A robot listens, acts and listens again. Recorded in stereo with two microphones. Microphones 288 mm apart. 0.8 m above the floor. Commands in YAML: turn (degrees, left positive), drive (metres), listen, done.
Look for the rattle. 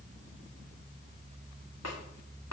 listen: true
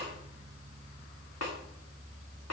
listen: true
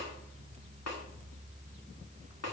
done: "I can't make out a rattle, only a snare drum."